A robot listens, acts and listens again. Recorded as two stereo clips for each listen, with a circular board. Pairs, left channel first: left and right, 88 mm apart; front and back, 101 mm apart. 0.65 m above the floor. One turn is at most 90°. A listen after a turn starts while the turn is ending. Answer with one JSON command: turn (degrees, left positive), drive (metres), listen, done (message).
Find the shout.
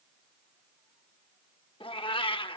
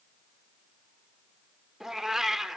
{"listen": true}
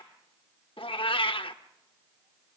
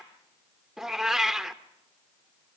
{"listen": true}
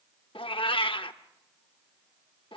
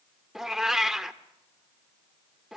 {"done": "I can't make out a shout to turn to."}